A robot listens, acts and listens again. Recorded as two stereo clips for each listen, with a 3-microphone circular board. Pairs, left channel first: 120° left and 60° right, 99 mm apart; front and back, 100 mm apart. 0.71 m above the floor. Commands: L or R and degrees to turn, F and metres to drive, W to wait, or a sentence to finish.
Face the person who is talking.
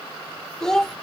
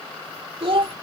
R155
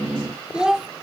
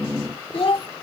L25
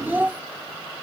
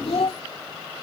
L15
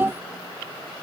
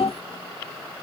L10
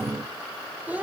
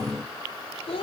L15
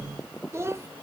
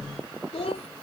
Facing the child speaking.